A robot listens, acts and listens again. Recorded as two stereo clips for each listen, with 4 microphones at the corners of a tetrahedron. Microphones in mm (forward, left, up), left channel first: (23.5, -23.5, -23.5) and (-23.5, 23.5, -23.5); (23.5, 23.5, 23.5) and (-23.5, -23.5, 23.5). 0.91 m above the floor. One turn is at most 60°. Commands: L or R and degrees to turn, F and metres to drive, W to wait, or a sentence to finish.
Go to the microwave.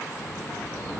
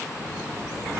W
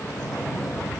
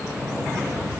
W
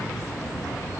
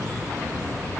I can't make out a microwave to turn to.